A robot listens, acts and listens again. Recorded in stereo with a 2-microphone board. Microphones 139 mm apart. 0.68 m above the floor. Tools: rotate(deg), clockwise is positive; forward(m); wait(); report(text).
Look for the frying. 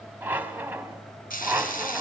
rotate(-90)
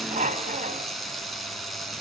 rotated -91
report("Found it: frying, straight ahead.")